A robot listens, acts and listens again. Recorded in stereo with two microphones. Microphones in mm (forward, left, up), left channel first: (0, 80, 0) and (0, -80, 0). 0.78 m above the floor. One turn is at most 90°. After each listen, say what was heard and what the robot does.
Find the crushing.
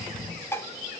Keep listening.
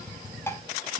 Keep listening.
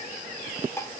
I can't make out crushing to turn to.